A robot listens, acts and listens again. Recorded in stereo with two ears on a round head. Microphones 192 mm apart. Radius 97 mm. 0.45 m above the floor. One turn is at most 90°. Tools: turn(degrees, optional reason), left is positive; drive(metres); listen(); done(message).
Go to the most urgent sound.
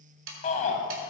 turn(degrees=35, reason="The shout: about 35° left or 145° left.")
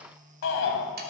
turn(degrees=90, reason="So it is at 110° left.")
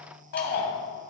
turn(degrees=50, reason="The shout is now 50° left.")
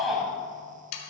drive(metres=1.0)
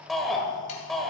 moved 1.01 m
drive(metres=1.0)
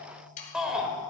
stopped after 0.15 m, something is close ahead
done("I am next to the shout.")